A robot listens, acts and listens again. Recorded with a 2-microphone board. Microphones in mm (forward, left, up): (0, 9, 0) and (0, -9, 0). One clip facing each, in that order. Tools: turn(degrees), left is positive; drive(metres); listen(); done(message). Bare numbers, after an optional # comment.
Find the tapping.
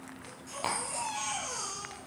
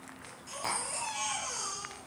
# The tapping: about 25° left or 155° left.
turn(25)
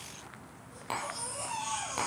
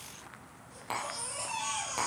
done("Found it: tapping, straight ahead.")